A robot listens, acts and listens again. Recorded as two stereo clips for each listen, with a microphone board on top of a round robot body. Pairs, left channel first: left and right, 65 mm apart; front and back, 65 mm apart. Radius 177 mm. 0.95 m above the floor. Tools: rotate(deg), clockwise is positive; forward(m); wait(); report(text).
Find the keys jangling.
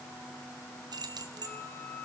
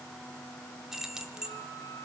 rotate(100)
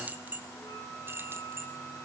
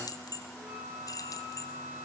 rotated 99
rotate(35)
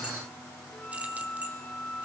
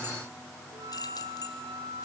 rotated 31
wait()
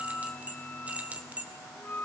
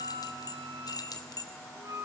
rotate(20)
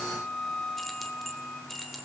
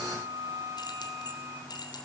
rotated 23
report("Found it: keys jangling, straight ahead, 2 to 4 m away.")